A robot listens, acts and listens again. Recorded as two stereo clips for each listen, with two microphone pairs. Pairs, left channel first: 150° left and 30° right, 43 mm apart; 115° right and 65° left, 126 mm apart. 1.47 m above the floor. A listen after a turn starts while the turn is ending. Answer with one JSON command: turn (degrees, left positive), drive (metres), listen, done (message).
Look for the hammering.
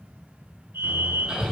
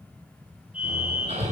{"turn": 35}
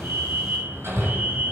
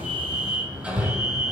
{"turn": -15}
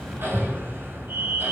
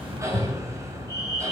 {"done": "Found it: hammering, straight ahead."}